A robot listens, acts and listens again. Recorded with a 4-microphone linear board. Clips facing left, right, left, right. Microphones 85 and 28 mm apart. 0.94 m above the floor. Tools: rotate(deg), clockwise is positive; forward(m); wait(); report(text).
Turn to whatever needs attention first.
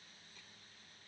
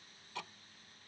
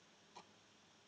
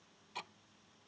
wait()
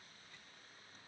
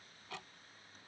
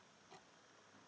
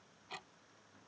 wait()
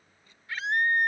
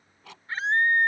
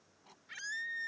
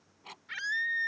rotate(35)
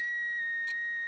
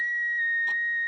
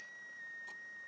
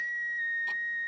rotate(115)
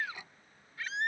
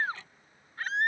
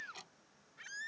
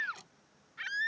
rotate(50)
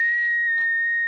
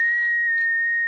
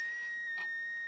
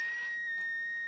rotate(10)
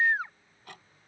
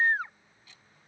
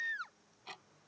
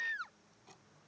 report("Facing the scream.")